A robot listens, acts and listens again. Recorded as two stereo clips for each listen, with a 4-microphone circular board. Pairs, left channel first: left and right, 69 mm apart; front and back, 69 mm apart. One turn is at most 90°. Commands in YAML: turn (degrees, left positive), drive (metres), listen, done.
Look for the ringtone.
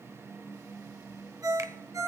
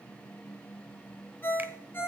turn: -60
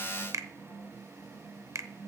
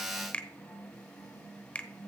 listen: true
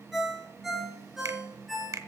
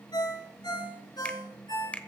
done: "Facing the ringtone."